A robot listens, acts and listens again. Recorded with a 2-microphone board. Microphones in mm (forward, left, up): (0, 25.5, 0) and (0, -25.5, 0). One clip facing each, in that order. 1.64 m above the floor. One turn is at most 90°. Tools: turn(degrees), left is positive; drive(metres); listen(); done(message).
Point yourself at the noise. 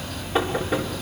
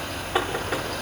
turn(degrees=-30)
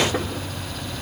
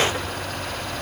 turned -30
listen()
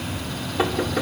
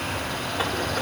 turn(degrees=20)
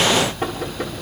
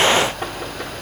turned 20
done("Facing the knocking.")